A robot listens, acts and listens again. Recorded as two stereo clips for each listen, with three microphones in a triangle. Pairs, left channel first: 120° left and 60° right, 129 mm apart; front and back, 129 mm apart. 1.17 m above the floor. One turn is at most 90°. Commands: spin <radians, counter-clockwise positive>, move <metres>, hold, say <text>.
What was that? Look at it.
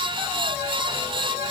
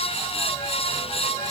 hold
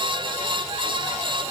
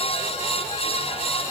hold
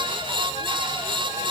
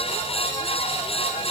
say I can't make out anything.